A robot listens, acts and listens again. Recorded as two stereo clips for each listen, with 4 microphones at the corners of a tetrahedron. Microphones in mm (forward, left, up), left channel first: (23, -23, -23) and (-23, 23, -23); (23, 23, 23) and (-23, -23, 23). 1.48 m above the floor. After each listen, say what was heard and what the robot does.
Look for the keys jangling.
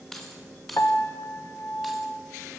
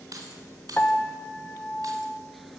The keys jangling: 130° right. Turn 130° right.
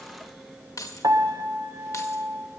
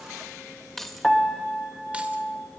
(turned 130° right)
The keys jangling is now 40° right. Turn 40° right.
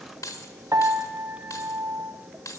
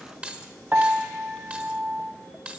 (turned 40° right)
The keys jangling is now 70° right. Turn 70° right.
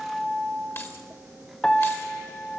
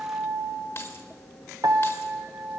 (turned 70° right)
Found it: keys jangling, straight ahead.